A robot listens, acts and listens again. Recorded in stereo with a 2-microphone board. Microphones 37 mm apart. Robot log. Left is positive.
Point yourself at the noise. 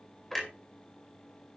cmd yaw +30
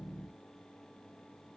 cmd idle
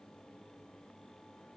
end: I heard a clunk, but can't make it out now. It was about 20° right or 140° left.